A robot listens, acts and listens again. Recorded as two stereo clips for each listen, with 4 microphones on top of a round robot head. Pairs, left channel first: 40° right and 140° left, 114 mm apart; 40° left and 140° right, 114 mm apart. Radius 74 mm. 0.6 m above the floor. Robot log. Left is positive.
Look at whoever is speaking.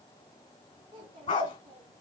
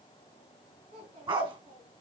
note: The child speaking: 170° right.
cmd yaw -170
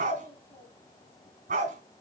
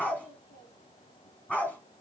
note: The child speaking is now 35° left.
cmd yaw +35
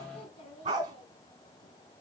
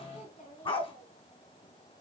end: Found it: a child speaking, straight ahead.